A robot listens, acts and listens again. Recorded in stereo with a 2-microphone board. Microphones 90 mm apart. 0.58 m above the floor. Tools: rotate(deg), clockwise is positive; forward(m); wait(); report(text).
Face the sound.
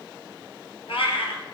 rotate(-90)
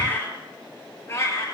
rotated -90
rotate(-35)
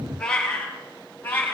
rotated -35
rotate(-25)
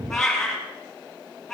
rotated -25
report("Facing the cat meowing.")